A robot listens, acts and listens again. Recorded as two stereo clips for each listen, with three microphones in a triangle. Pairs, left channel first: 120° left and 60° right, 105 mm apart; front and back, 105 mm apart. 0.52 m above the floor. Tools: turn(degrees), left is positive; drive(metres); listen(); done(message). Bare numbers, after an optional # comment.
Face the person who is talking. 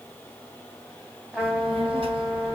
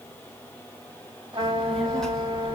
# The child speaking: 85° right.
turn(-85)
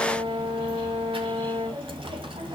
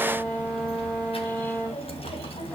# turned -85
# The child speaking is now 25° right.
turn(-25)
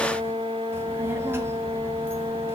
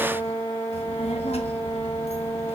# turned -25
# The child speaking is now 10° left.
turn(10)
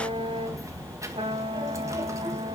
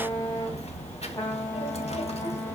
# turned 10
done("Found it: a child speaking, straight ahead, 2 to 4 m away.")